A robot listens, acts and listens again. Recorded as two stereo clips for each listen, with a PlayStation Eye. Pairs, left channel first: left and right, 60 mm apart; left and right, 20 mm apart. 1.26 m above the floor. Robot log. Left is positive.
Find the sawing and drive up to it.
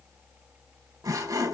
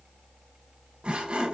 note: The sawing: about 75° right or 105° right.
cmd yaw -75
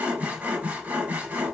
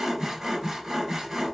note: So it is at 25° right.
cmd yaw -25
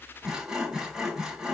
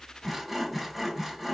note: The sawing is now 10° right.
cmd yaw -10
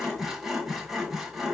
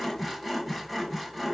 cmd fwd 1.0
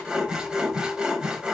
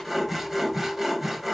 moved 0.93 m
note: The sawing is now 15° right.
cmd yaw -15
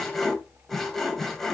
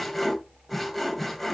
cmd fwd 1.0
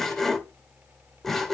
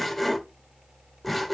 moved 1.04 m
cmd fwd 1.0
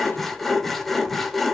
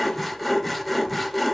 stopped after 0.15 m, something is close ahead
end: I am next to the sawing.